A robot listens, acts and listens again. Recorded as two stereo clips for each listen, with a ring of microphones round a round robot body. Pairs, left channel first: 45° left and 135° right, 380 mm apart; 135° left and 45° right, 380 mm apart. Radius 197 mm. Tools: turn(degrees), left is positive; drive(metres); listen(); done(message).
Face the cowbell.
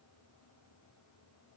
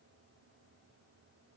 listen()
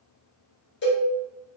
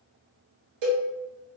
turn(degrees=-20)
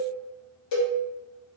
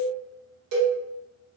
done("Found it: a cowbell, straight ahead, 1 to 2 m away.")